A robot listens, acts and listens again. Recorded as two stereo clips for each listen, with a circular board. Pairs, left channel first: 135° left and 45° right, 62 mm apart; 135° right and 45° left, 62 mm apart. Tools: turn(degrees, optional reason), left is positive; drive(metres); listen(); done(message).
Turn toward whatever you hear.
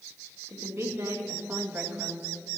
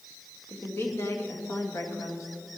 turn(degrees=-105, reason="The woman speaking: 105° right.")
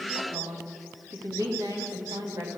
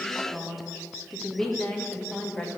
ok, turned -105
turn(degrees=-65, reason="The woman speaking is now 65° right.")
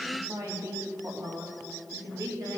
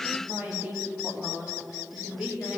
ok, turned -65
turn(degrees=-25, reason="The woman speaking is now 25° right.")
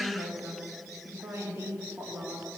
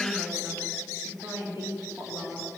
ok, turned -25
done("Found it: a woman speaking, straight ahead, 2 to 4 m away.")